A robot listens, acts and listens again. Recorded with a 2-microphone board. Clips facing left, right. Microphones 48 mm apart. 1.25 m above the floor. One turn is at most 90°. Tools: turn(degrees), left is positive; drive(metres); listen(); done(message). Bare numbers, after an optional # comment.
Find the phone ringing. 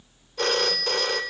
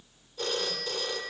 turn(90)
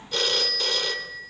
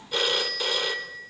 # So it is at 10° right.
turn(-10)
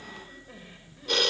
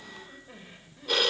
done("Found it: a phone ringing, straight ahead.")